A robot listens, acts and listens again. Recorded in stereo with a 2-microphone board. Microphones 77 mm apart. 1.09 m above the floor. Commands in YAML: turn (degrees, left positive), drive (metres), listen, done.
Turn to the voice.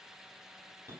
listen: true
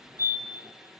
listen: true
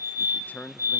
turn: 20
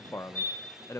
turn: 135
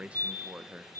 turn: -15
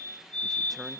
done: "Found it: a man speaking, straight ahead, under 1 m away."